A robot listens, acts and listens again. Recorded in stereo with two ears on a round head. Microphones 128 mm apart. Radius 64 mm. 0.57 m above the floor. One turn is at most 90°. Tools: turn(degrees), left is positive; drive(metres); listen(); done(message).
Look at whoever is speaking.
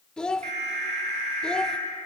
turn(degrees=30)
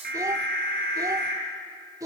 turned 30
turn(degrees=-25)
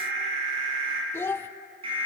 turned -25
turn(degrees=15)
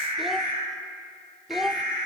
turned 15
done("Found it: a child speaking, straight ahead.")